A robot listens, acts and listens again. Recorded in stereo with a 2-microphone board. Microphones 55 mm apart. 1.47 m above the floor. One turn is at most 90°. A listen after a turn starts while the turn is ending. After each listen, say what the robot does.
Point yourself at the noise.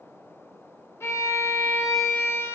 Turn 55° left.
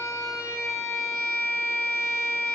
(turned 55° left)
Turn 65° left.
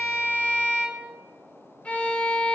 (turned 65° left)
Turn 25° left.
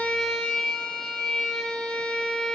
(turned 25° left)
Turn 15° left.
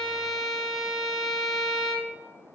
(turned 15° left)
Found it: a violin, straight ahead.